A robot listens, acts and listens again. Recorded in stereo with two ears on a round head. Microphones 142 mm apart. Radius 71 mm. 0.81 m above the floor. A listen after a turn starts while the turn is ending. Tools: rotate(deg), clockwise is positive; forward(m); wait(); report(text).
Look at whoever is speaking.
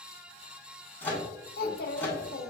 rotate(-65)
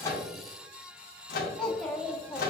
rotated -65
report("Found it: a child speaking, straight ahead.")